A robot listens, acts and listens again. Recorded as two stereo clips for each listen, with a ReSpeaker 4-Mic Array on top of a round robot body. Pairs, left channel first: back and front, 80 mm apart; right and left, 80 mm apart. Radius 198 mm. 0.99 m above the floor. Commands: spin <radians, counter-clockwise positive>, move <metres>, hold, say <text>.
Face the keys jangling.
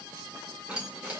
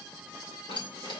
spin -1.31
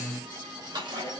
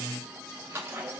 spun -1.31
spin 0.52
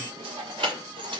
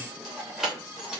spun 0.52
spin 0.17
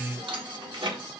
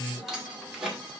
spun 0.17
say Found it: keys jangling, straight ahead.